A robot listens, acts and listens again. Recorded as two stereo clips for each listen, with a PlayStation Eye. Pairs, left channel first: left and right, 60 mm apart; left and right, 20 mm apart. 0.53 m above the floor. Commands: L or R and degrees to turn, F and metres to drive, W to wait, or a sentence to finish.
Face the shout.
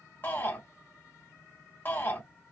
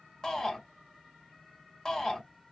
L35
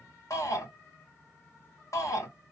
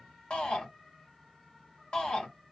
L110
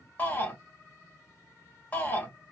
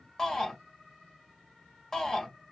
L30
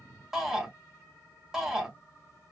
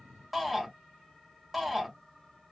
Facing the shout.